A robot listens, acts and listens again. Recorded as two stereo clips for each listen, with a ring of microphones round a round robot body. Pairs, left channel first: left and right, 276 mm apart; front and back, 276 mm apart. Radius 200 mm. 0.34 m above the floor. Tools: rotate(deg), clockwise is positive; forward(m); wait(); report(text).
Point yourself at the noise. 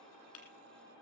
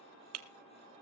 rotate(-150)
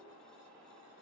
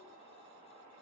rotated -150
report("Facing where the breaking glass came from. I can't hear it now.")